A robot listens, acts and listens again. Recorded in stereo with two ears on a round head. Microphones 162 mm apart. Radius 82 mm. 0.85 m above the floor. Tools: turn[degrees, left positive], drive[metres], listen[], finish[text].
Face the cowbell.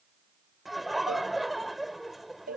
Thought: The cowbell: about 50° right or 130° right.
Action: turn[-50]
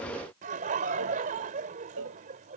Thought: So it is at 85° right.
Action: turn[-85]
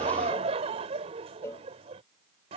Thought: The cowbell is now 15° left.
Action: turn[15]
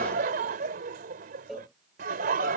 Action: finish[Found it: a cowbell, straight ahead.]